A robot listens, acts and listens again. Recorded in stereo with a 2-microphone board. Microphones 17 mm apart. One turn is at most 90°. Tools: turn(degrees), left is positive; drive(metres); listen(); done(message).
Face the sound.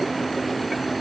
listen()
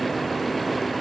listen()
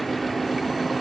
done("I can't make out anything.")